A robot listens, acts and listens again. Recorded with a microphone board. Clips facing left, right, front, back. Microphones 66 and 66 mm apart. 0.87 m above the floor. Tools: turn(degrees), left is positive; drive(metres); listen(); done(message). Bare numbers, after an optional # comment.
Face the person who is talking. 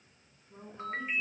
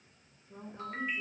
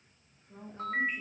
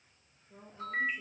# The woman speaking: 45° right.
turn(-45)
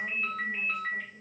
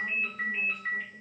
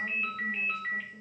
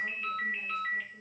listen()
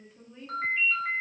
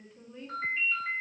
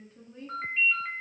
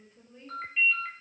done("Found it: a woman speaking, straight ahead, 1 to 2 m away.")